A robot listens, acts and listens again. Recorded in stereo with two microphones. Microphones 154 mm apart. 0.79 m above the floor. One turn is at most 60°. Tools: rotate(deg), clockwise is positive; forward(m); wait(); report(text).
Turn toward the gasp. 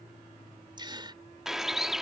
rotate(30)
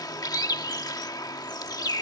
wait()
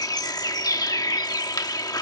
report("I heard a gasp, but can't make it out now. It was about straight ahead or 120° right.")